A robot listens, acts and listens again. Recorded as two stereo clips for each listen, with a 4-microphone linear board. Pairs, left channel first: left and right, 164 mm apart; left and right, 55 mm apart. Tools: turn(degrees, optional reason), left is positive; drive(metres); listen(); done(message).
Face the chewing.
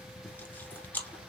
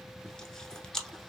turn(degrees=30)
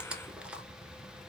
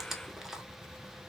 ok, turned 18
done("Facing the chewing, under 1 m away.")